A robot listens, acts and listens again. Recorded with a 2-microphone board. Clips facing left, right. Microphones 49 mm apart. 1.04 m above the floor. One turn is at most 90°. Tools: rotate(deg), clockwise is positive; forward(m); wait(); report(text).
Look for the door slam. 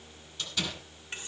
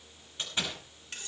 rotate(30)
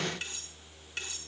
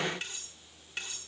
wait()
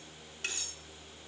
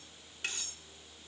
report("I heard a door slam, but can't make it out now. It was about straight ahead or 120° right.")